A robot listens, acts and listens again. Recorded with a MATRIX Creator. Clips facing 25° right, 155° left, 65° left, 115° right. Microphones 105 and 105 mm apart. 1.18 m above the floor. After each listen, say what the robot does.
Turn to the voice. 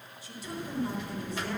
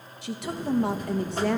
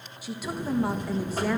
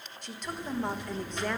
Turn 150° left.
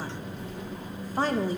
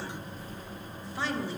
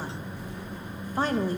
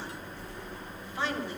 Turn 20° left.
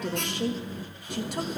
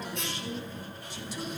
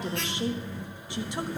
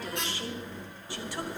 Keep listening.
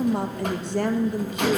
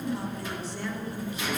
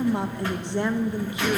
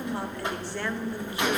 Found it: a woman speaking, straight ahead, 1 to 2 m away.